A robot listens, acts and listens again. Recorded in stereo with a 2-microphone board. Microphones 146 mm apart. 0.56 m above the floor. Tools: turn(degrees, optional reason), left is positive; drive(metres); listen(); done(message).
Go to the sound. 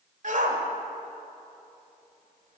turn(degrees=-60, reason="The shout: about 60° right or 120° right.")
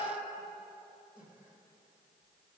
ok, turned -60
listen()
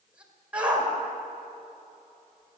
turn(degrees=-10, reason="So it is at 10° right.")
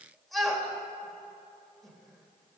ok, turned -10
drive(metres=1.0)
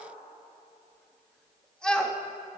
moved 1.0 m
drive(metres=1.0)
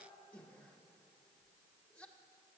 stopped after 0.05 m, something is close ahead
listen()
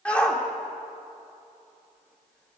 turn(degrees=10, reason="The shout is now 10° left.")
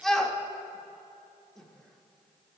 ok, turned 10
done("I am next to the shout.")